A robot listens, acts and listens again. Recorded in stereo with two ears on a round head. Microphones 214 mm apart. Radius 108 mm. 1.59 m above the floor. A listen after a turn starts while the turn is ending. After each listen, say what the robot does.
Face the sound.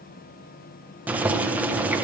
Turn 30° right.
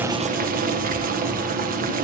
Turn 145° right.
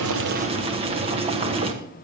Turn 25° right.
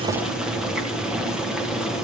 Facing the boiling, 1 to 2 m away.